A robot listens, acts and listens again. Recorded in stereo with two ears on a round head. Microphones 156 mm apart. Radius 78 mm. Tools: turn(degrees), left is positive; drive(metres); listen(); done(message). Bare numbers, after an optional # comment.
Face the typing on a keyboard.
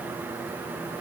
listen()
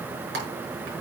# The typing on a keyboard: about 65° right or 115° right.
turn(-65)
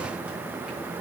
listen()
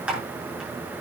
done("Found it: typing on a keyboard, straight ahead, over 4 m away.")